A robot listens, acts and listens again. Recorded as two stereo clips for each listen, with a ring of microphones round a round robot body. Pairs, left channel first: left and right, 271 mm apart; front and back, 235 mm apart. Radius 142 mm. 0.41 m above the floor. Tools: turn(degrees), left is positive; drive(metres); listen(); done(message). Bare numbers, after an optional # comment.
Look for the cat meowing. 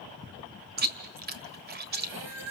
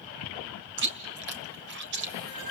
# The cat meowing: 100° right.
turn(-100)
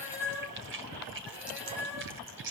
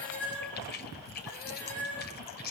done("Facing the cat meowing, over 4 m away.")